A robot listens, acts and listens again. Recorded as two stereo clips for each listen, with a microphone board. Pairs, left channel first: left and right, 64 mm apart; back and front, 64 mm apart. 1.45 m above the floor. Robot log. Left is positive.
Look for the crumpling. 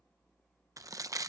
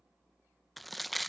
note: The crumpling: 90° right.
cmd yaw -90
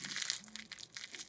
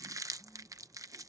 end: Found it: crumpling, straight ahead.